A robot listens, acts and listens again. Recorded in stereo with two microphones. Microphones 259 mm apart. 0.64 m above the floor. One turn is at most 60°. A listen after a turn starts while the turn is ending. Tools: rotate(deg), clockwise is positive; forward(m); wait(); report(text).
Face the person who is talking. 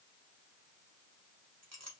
wait()
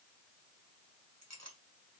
wait()
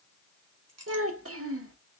rotate(60)
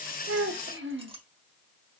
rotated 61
rotate(55)
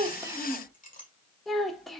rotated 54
report("Found it: a child speaking, straight ahead, under 1 m away.")